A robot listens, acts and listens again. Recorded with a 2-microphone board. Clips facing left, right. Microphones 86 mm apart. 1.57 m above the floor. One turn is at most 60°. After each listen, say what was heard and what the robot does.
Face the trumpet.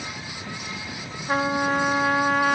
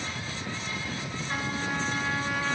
The trumpet: about 55° left or 125° left. Turn 55° left.
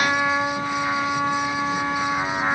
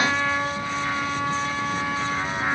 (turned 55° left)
So it is at 20° left. Turn 20° left.
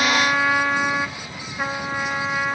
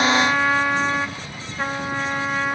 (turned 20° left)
Facing the trumpet.